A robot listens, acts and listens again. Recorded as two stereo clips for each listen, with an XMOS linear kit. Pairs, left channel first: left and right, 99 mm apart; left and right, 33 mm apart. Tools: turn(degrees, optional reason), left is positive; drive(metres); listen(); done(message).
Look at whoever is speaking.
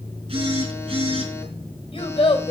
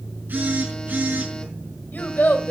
turn(degrees=70, reason="The child speaking: about 70° left or 110° left.")
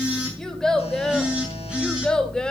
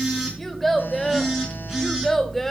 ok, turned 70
turn(degrees=10, reason="So it is at 10° left.")
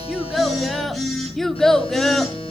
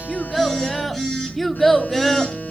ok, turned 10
done("Facing the child speaking.")